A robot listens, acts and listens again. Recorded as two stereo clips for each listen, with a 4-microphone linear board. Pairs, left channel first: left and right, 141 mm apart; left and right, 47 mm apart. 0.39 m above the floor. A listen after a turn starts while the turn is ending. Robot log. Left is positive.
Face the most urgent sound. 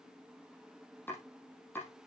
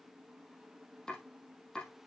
cmd idle
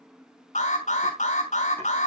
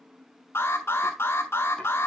note: The alarm: about 60° left or 120° left.
cmd yaw +60
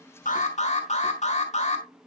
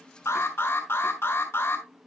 note: So it is at 55° left.
cmd yaw +55
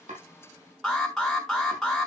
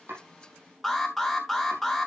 end: Facing the alarm.